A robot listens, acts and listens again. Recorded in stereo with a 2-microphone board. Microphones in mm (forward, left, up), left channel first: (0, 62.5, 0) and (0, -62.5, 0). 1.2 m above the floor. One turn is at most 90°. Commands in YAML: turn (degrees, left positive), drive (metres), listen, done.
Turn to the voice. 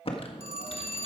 listen: true
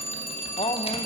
turn: 55
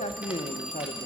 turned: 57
turn: 70
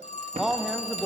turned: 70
done: "Found it: a man speaking, straight ahead, under 1 m away."